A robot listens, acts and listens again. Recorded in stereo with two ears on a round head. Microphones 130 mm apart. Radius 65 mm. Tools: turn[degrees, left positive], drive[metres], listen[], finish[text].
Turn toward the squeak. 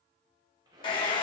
Thought: The squeak: about 30° right or 150° right.
Action: turn[-30]
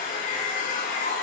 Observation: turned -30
Action: listen[]
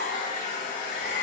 Action: listen[]
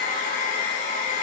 Action: finish[I heard a squeak, but can't make it out now. It was about straight ahead or 120° right.]